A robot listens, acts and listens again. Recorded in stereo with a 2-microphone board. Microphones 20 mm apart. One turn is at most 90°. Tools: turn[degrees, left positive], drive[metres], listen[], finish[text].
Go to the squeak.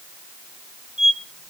Thought: The squeak: about 60° right or 120° right.
Action: turn[-60]
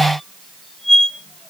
Action: drive[1.0]
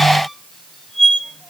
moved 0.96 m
Action: drive[1.0]
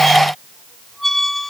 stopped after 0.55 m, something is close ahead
Action: finish[Arrived at the squeak, straight ahead.]